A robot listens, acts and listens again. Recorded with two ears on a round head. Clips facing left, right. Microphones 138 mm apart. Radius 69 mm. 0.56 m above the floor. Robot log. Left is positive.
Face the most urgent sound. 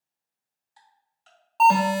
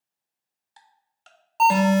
cmd yaw -30
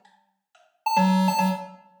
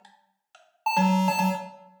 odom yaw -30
note: So it is at 15° left.
cmd yaw +15
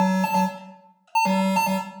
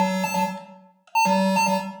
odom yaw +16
end: Facing the alarm.